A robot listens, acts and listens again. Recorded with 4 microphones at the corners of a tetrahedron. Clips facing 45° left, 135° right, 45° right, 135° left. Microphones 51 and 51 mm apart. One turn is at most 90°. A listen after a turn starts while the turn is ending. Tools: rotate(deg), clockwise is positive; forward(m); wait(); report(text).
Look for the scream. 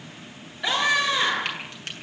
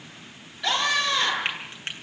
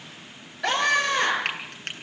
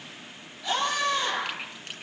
rotate(30)
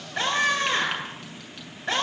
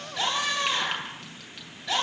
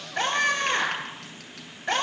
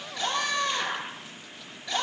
report("Facing the scream, over 4 m away.")